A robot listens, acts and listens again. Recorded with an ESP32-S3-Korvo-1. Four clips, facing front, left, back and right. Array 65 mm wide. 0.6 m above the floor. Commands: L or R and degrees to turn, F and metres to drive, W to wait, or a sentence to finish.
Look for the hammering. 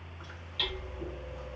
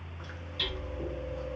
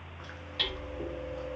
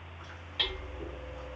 R130
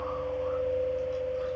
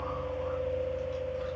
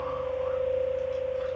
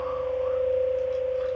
W
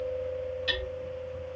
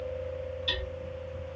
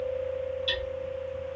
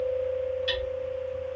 R30
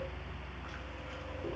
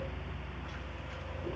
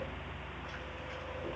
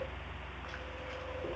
W
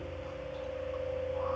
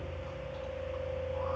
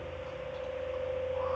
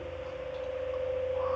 W
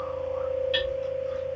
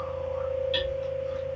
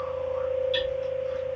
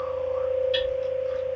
I heard hammering from this way, but can't make it out now.